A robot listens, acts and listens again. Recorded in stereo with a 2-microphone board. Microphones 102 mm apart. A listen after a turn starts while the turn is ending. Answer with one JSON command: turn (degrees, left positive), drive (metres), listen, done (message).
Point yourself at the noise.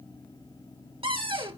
{"turn": -60}
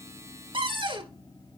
{"turn": -55}
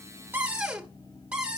{"turn": -10}
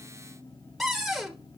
{"done": "Facing the cupboard door."}